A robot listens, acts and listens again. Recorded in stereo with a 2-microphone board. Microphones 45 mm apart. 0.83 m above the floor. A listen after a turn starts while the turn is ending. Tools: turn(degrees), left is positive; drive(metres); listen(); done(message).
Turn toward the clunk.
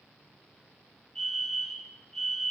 listen()
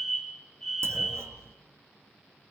turn(degrees=-90)
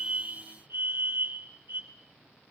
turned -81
turn(degrees=-10)
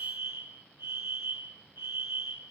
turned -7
done("Facing where the clunk came from. I can't hear it now.")